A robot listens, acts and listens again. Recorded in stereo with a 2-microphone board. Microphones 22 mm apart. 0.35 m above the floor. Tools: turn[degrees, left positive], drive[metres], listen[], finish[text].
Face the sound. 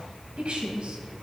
Thought: The woman speaking: about 50° right or 130° right.
Action: turn[-50]
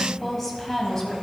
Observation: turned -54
Thought: So it is at 25° left.
Action: turn[25]
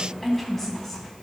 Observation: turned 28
Thought: The woman speaking is now 15° left.
Action: turn[15]
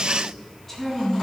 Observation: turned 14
Thought: The woman speaking is now 15° left.
Action: turn[15]
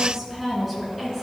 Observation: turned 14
Action: finish[Facing the woman speaking.]